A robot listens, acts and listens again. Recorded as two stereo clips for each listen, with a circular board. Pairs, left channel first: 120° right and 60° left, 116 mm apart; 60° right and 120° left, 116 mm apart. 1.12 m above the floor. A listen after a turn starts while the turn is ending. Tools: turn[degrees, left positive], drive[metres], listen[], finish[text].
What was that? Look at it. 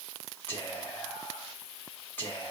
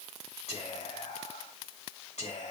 Thought: The whispering: 50° right.
Action: turn[-50]
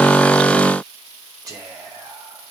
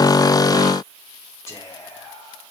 Action: finish[Found it: whispering, straight ahead, 2 to 4 m away.]